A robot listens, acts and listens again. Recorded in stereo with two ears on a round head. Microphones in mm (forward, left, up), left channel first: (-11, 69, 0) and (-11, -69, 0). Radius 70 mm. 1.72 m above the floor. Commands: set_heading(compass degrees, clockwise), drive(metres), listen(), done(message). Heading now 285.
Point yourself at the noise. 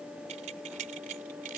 set_heading(340)
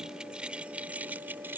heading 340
set_heading(355)
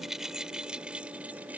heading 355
set_heading(5)
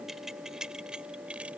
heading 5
done("Facing the keys jangling.")